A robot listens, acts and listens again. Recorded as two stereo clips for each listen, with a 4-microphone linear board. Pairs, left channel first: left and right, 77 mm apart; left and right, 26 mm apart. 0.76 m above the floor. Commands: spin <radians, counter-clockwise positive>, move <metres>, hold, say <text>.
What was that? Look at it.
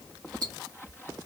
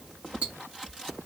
spin -0.87
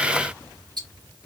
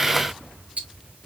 spin -1.31
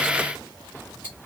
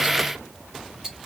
spin -0.44
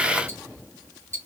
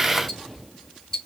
spin 0.44
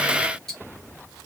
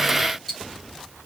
say Facing the ticking.